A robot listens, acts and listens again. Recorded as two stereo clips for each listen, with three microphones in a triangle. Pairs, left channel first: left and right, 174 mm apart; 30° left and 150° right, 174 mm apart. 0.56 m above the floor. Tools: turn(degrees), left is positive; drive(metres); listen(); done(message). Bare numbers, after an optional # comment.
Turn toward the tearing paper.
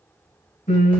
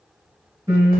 listen()
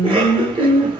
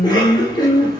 listen()
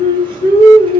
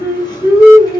done("I can't make out tearing paper, only singing and a cough.")